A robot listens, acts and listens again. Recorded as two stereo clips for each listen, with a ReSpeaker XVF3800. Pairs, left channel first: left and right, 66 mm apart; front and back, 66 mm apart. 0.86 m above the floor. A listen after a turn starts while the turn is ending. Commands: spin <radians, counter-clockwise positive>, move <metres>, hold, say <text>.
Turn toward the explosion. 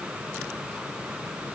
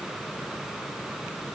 hold
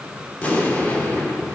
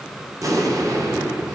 spin 2.71
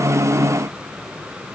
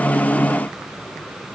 say Facing where the explosion came from. I can't hear it now.